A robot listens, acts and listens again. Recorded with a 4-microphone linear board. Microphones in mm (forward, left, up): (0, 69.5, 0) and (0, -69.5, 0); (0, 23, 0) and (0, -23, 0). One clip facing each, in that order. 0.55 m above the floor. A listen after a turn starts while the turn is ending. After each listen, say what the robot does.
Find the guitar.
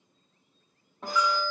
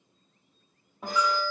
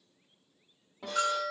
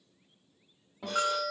Turn 30° right.
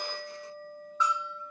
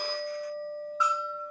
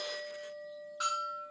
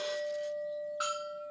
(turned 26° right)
Turn 150° right.
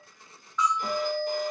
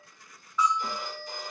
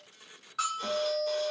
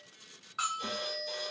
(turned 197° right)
Turn 45° left.
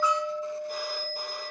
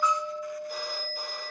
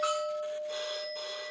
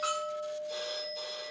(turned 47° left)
Found it: a guitar, straight ahead, under 1 m away.